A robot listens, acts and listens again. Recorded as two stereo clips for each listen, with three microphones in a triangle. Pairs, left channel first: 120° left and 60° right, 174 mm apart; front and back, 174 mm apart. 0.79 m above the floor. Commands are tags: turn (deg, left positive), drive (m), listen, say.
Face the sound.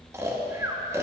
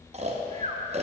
<turn deg="-130"/>
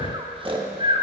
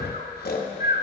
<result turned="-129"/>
<say>Facing the snoring, under 1 m away.</say>